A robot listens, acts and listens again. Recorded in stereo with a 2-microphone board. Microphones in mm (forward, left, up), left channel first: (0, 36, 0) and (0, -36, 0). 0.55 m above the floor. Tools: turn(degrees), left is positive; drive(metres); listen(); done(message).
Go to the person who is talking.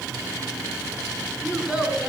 turn(degrees=-25)
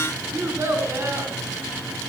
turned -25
turn(degrees=-135)
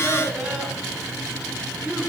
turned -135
drive(metres=1.0)
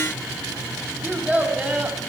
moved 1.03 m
turn(degrees=-10)
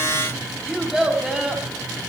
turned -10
drive(metres=1.0)
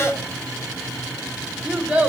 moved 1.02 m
drive(metres=1.0)
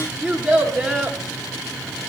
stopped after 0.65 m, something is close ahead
done("Arrived at the child speaking, straight ahead.")